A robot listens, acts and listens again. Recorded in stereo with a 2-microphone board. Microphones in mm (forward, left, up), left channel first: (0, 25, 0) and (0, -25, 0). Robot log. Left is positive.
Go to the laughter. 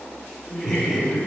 cmd yaw +30
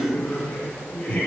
note: So it is at 145° left.
cmd yaw +145
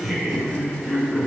cmd fwd 1.0
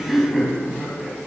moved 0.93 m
cmd fwd 1.0
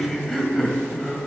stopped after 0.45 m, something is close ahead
end: Arrived at the laughter, straight ahead.